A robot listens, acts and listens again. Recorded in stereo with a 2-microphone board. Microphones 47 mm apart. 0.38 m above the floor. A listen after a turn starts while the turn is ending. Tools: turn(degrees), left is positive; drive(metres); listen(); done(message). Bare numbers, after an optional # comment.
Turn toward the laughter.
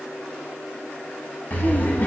# The laughter: about 35° left or 145° left.
turn(35)
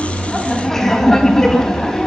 # So it is at 10° left.
turn(10)
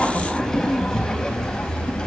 # The laughter is now 15° left.
turn(15)
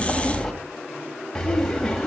# The laughter is now 10° left.
turn(10)
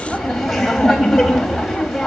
done("Found it: laughter, straight ahead.")